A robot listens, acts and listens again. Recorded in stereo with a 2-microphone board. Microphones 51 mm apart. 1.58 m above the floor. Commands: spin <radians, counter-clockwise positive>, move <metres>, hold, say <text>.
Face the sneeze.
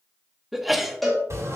spin -0.52
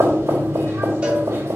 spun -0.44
hold
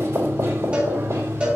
say I heard a sneeze, but can't make it out now. It was about 20° left or 150° right.